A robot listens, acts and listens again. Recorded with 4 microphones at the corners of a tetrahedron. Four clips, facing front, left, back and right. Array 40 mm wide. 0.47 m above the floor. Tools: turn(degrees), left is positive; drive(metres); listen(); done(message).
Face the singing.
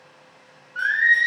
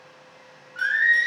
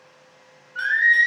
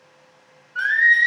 turn(degrees=-110)
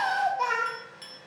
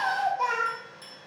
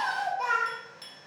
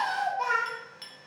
turn(degrees=-15)
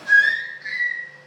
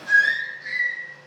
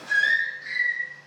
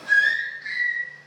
turn(degrees=-35)
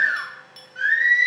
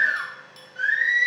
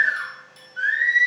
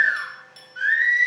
turn(degrees=-30)
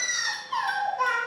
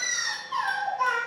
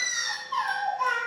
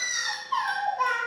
turn(degrees=-10)
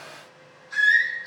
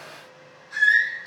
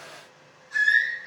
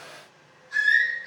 done("Facing the singing, 1 to 2 m away.")